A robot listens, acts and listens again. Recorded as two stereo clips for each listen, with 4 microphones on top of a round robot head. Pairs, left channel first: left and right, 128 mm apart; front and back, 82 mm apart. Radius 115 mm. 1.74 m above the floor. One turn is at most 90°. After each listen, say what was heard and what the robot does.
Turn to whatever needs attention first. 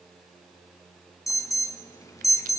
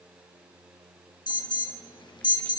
The alarm: 25° left. Turn 25° left.
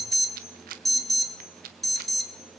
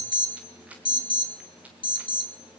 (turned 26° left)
Found it: an alarm, straight ahead, 1 to 2 m away.